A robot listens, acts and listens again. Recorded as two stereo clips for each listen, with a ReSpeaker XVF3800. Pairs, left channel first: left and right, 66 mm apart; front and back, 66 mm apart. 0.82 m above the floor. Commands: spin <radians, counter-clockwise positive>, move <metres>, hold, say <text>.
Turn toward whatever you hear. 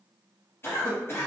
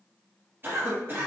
spin 2.27
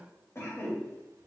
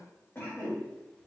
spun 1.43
spin 0.87
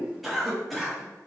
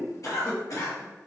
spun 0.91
say Facing the cough, 1 to 2 m away.